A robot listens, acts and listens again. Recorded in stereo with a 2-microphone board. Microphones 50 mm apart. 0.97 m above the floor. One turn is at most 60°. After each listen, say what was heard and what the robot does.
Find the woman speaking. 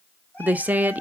The woman speaking: about 30° right or 150° right. Turn 30° right.
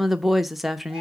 Found it: a woman speaking, straight ahead, under 1 m away.